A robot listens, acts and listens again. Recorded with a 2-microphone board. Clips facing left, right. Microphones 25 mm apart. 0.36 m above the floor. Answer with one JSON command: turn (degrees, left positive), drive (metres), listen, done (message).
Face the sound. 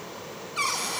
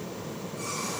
{"turn": 65}
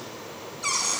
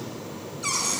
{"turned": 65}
{"turn": 10}
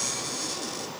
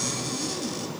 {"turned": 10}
{"done": "Found it: a cupboard door, straight ahead, 2 to 4 m away."}